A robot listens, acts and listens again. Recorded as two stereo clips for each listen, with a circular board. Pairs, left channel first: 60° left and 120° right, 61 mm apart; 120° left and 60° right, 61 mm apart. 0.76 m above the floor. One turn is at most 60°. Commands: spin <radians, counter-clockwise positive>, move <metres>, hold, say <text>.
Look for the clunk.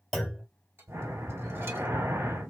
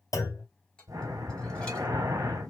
spin 1.05
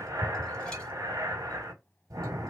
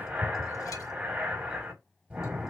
spin 1.05
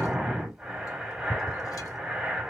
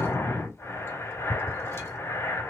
spin 0.44
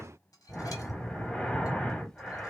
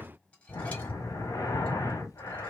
say I heard a clunk from this way, but can't make it out now.